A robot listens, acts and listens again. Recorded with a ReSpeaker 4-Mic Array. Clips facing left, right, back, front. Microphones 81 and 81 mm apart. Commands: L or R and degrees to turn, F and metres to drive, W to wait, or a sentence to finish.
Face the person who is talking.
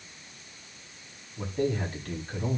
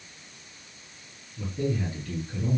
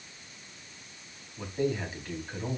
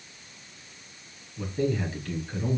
L110
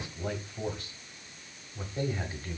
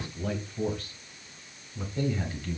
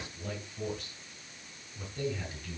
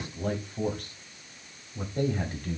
L30
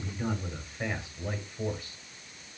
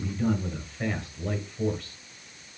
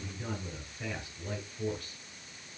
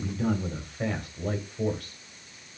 L10
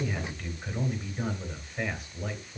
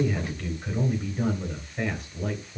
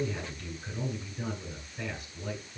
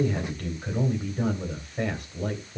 Facing the man speaking, 2 to 4 m away.